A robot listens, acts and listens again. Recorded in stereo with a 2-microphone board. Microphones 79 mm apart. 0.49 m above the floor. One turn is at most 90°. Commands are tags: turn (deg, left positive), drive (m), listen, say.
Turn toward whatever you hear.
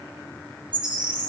<turn deg="-75"/>
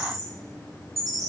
<say>Found it: a bird, straight ahead, 2 to 4 m away.</say>